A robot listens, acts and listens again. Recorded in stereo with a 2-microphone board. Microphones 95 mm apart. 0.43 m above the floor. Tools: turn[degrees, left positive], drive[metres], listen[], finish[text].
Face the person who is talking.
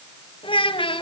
Thought: The child speaking: about 70° left or 110° left.
Action: turn[70]
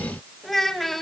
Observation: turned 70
Action: finish[Found it: a child speaking, straight ahead.]